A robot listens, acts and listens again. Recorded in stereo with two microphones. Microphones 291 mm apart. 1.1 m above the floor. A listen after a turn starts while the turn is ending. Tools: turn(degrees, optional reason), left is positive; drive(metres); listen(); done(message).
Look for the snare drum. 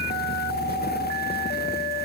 listen()
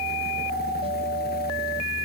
listen()
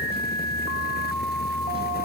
done("I can't make out a snare drum to turn to.")